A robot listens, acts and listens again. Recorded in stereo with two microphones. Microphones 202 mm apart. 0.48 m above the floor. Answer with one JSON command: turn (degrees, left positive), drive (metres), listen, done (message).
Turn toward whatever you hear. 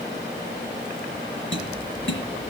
{"turn": 90}
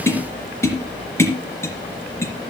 {"turn": 15}
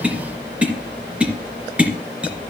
{"done": "Facing the tapping."}